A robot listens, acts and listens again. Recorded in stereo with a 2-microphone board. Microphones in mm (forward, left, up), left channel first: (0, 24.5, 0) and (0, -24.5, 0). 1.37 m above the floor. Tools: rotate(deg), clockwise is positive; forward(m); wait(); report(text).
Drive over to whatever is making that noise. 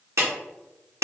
rotate(75)
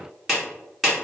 forward(1.0)
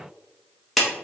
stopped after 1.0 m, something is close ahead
report("I am next to the clap.")